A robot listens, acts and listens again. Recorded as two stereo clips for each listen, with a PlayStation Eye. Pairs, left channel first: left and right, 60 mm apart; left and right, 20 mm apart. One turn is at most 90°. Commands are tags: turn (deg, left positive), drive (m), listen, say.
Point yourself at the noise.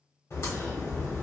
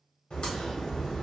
<turn deg="50"/>
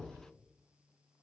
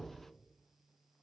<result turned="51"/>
<listen/>
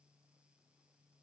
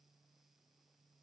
<say>I heard a crack, but can't make it out now. It was about straight ahead or 80° left.</say>